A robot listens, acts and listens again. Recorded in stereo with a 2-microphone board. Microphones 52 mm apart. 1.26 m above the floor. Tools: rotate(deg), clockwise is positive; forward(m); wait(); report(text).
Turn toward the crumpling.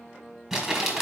rotate(30)
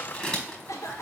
rotate(-25)
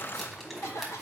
report("Facing the crumpling.")